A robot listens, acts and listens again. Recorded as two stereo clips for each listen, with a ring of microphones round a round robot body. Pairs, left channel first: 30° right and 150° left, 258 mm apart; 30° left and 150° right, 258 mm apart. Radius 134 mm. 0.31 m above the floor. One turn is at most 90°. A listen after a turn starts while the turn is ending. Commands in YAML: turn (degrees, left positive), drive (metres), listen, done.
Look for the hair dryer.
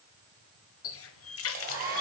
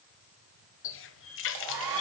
turn: -90
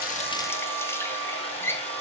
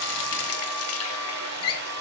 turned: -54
turn: -90
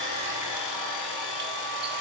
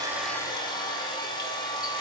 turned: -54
turn: -45
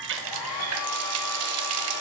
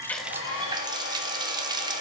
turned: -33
turn: -10
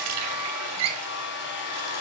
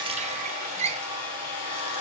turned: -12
done: "Facing the hair dryer, 2 to 4 m away."